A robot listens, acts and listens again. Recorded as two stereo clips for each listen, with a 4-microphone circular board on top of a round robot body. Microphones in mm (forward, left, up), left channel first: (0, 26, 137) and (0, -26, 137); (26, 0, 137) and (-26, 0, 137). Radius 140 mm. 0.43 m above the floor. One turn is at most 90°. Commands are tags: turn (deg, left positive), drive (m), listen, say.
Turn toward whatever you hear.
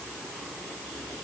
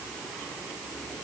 <listen/>
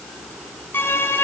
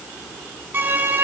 <turn deg="90"/>
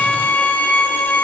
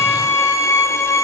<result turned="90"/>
<turn deg="35"/>
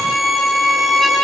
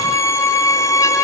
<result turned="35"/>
<say>Facing the violin.</say>